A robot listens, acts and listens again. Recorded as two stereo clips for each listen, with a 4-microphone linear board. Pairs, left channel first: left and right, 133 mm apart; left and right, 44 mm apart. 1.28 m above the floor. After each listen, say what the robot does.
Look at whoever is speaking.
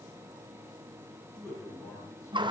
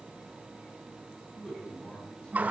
Turn 20° left.
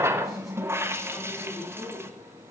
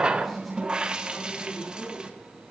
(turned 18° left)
Facing the man speaking, over 4 m away.